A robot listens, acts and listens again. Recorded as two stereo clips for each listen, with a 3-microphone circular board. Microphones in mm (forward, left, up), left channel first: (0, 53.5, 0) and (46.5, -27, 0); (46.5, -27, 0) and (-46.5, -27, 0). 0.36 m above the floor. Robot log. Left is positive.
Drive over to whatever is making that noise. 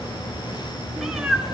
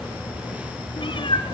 note: The cat meowing: 25° left.
cmd yaw +25
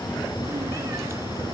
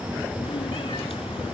cmd idle
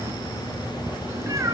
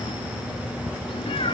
cmd fwd 1.0
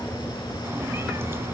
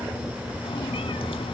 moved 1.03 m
cmd idle
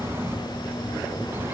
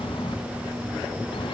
cmd idle
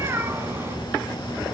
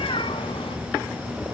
cmd fwd 1.0
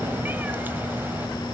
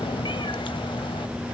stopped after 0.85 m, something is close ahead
cmd idle
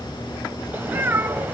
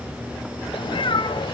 note: The cat meowing is now 10° left.
cmd yaw +10
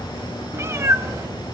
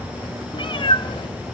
end: Arrived at the cat meowing, straight ahead.